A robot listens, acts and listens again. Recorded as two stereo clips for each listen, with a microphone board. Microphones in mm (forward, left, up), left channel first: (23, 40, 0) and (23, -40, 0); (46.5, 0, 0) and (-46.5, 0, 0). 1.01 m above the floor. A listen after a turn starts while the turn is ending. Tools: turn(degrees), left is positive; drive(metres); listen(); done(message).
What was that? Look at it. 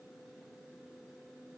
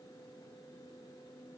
listen()
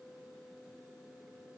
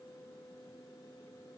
listen()
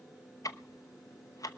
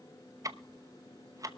turn(degrees=130)
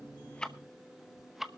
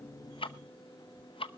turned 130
done("Found it: ticking, straight ahead.")